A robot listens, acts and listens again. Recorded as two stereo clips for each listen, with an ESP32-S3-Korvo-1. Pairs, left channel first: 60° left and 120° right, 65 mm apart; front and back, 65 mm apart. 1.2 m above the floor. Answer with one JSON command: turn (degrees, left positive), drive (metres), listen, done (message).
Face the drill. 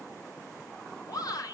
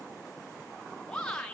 {"listen": true}
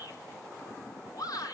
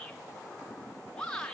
{"listen": true}
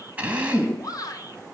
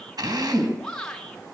{"turn": 170}
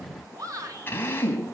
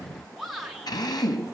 {"done": "Facing the drill."}